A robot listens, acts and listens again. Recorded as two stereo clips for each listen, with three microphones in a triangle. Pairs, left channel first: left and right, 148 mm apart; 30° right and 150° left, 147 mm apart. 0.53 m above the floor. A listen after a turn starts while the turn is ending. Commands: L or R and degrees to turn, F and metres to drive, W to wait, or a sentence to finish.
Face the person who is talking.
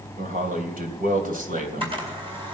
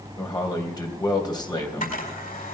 R90
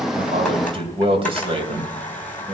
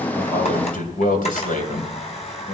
R40
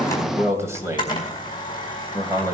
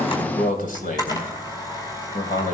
R20
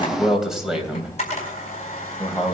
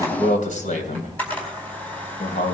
Facing the man speaking.